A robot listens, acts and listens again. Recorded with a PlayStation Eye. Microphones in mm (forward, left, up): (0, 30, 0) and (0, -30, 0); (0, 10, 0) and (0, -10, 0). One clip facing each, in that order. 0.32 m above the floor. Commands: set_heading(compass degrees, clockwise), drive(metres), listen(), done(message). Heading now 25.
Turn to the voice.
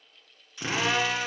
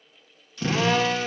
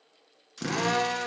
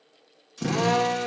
listen()
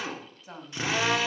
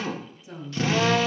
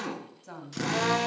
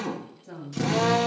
set_heading(340)
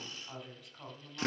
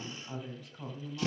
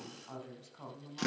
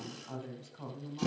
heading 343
done("Facing the woman speaking, 2 to 4 m away.")